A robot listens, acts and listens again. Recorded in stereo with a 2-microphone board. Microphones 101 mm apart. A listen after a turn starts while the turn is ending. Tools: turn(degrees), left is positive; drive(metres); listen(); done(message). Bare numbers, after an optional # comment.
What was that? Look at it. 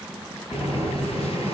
turn(90)
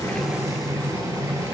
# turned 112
# So it is at 30° right.
turn(-30)
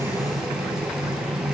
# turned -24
done("Facing the boiling, 2 to 4 m away.")